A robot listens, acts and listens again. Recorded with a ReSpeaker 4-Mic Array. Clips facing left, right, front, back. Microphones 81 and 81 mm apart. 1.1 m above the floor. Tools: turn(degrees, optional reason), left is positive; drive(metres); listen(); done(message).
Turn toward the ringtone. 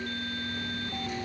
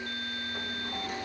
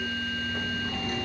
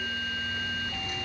listen()
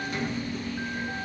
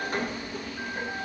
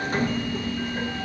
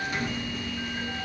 listen()
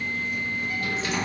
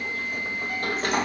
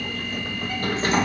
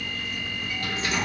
done("I can't make out a ringtone, only a sliding door.")